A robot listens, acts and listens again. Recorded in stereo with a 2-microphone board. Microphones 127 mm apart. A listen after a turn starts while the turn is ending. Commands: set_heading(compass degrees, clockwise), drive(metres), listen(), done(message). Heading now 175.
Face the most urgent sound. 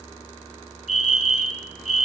set_heading(110)
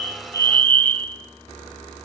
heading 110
set_heading(100)
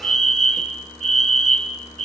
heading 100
done("Found it: a fire alarm, straight ahead.")